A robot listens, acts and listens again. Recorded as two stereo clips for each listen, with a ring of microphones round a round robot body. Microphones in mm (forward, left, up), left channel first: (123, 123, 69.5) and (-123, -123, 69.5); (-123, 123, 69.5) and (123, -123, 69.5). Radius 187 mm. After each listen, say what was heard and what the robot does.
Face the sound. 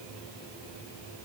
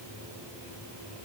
Keep listening.
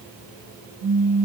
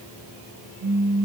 The pop: 95° right. Turn 95° right.
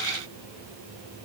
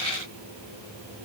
I heard a pop from this way, but can't make it out now.